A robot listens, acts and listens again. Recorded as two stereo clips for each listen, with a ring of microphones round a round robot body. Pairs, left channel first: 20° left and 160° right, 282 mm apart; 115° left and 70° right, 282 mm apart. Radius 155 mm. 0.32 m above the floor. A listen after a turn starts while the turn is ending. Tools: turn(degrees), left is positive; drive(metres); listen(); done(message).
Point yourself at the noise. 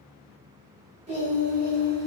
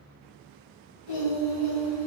turn(degrees=150)
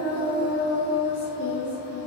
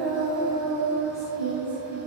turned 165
turn(degrees=45)
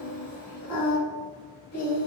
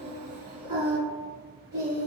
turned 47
turn(degrees=10)
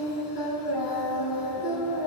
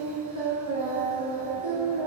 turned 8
done("Facing the singing.")